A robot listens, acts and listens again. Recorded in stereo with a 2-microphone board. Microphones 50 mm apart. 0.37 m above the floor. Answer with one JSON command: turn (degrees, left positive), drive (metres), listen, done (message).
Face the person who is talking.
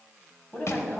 {"turn": 30}
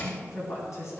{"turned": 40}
{"turn": 115}
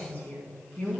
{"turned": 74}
{"turn": 30}
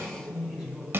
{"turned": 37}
{"done": "Found it: a woman speaking, straight ahead, over 4 m away."}